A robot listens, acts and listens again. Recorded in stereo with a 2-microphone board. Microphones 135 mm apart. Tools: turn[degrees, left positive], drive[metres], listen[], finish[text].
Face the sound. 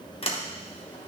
Thought: The sliding door: about 45° left or 135° left.
Action: turn[45]
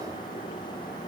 Action: listen[]
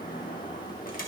Thought: So it is at 95° left.
Action: turn[95]
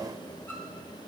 Action: listen[]
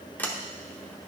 Thought: The sliding door is now 15° left.
Action: turn[15]
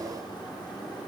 Action: listen[]
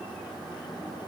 Action: listen[]
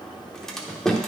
Action: finish[Facing the sliding door.]